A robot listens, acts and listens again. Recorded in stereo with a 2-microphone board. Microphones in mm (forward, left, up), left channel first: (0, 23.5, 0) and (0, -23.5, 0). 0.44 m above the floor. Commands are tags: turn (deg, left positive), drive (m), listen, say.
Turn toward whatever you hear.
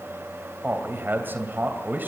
<turn deg="-45"/>
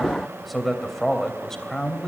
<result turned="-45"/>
<turn deg="15"/>
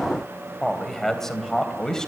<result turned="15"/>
<turn deg="15"/>
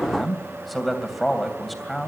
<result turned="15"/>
<say>Found it: a man speaking, straight ahead, 2 to 4 m away.</say>